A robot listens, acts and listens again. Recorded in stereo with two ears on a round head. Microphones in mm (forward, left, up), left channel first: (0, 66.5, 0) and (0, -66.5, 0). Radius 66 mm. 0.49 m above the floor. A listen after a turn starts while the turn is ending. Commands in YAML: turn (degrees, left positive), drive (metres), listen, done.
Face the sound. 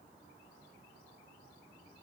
listen: true
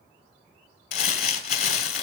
turn: 65
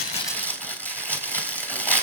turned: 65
turn: 10
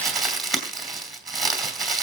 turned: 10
done: "Found it: crumpling, straight ahead, 2 to 4 m away."